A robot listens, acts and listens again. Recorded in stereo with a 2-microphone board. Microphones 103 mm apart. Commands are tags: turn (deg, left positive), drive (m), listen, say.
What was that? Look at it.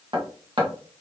<turn deg="-55"/>
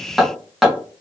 <say>Found it: hammering, straight ahead, 1 to 2 m away.</say>